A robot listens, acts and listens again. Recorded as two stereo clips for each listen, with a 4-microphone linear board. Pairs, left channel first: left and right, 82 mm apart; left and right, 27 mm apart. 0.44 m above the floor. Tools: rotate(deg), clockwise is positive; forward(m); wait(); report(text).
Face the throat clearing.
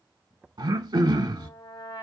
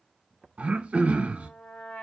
rotate(70)
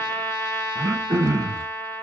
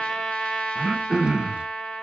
rotate(40)
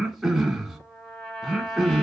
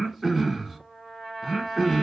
report("Facing the throat clearing.")